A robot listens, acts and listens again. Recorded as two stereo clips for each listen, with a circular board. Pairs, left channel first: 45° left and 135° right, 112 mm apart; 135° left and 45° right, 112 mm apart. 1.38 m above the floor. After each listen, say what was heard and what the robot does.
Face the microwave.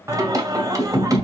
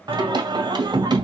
Keep listening.
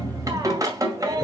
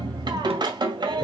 Keep listening.
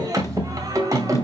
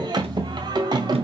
I can't make out a microwave to turn to.